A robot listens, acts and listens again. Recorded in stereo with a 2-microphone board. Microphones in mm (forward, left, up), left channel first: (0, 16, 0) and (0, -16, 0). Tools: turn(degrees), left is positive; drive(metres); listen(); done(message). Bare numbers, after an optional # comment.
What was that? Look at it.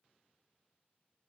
listen()
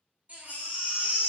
# The baby crying: about 50° right or 130° right.
turn(-50)
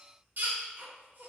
# So it is at 75° right.
turn(-75)
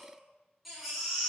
done("Facing the baby crying, 1 to 2 m away.")